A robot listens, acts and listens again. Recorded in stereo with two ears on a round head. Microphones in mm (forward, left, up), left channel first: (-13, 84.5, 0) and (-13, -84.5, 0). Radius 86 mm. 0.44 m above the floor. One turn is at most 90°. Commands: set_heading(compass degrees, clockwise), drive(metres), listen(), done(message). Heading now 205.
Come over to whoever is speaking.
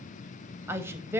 set_heading(235)
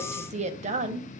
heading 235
set_heading(325)
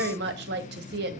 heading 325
set_heading(35)
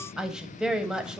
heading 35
drive(1.0)
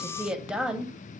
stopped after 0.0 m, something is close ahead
done("Something is in my way. I am facing the woman speaking but have not reached it.")